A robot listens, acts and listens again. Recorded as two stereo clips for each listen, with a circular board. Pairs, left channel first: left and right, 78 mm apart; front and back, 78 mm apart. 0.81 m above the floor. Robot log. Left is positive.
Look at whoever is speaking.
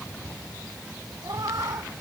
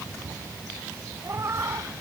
cmd idle
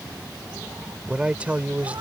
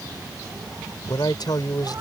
note: The man speaking: 20° right.
cmd yaw -20
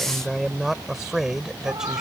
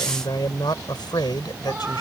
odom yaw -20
end: Found it: a man speaking, straight ahead.